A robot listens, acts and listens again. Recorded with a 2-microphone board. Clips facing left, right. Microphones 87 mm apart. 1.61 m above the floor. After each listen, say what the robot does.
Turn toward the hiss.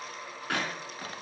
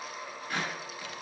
Keep listening.
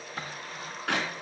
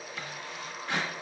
Keep listening.
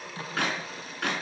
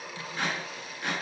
I can't make out a hiss, only a drawer and a clap.